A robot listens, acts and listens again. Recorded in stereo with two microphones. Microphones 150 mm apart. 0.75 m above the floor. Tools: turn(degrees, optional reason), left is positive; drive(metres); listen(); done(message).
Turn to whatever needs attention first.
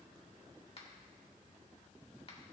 listen()
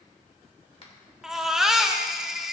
turn(degrees=-30)
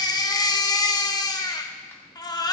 turn(degrees=30, reason="So it is at 30° left.")
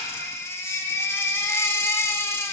turn(degrees=20, reason="The baby crying is now 20° left.")
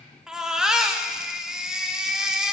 done("Facing the baby crying.")